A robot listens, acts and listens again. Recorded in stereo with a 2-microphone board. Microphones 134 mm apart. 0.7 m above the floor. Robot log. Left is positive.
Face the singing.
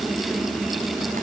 cmd idle
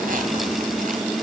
cmd idle
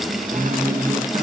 note: The singing: about 20° right or 160° right.
cmd yaw -20
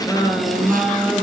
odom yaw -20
end: Found it: singing, straight ahead.